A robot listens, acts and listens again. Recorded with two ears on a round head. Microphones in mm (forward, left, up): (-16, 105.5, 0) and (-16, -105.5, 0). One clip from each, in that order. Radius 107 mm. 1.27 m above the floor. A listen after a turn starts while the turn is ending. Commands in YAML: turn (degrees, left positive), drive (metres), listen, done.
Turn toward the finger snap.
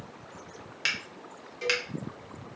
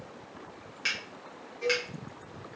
turn: 25
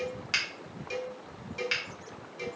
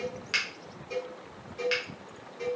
done: "Found it: a finger snap, straight ahead, under 1 m away."